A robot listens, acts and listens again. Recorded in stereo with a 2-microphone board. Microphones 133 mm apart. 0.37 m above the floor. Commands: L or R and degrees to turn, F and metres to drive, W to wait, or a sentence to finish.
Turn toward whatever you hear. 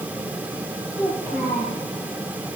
L20
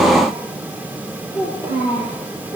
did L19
L30
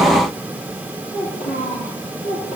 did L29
L125
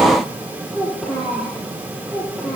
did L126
Found it: a child speaking, straight ahead.